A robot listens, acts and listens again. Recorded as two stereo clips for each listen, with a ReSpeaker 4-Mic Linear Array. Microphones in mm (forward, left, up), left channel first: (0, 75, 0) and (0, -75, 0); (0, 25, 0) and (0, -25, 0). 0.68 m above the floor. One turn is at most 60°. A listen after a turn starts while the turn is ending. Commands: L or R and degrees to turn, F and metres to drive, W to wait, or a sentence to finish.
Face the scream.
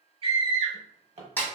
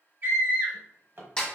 R40
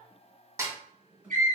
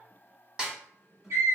R60
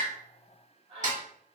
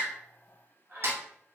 R45
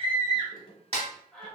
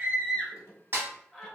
Facing the scream.